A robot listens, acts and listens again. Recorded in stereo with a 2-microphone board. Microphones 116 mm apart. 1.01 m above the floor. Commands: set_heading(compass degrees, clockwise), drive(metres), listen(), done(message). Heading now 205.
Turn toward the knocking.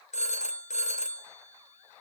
listen()
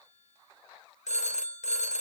listen()
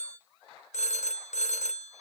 done("I can't make out knocking to turn to.")